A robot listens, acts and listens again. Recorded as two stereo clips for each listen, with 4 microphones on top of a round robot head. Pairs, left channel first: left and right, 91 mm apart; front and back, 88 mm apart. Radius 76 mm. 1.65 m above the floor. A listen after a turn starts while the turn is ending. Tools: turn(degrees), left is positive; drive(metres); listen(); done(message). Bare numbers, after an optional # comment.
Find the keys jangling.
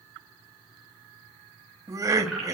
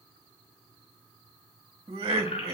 done("Found it: keys jangling, straight ahead, over 4 m away.")